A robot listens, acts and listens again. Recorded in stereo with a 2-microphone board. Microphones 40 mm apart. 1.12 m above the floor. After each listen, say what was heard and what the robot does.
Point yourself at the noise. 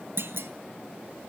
The clunk: about 70° right or 110° right. Turn 70° right.
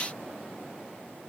Keep listening.
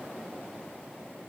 I heard a clunk, but can't make it out now. It was about straight ahead or 40° right.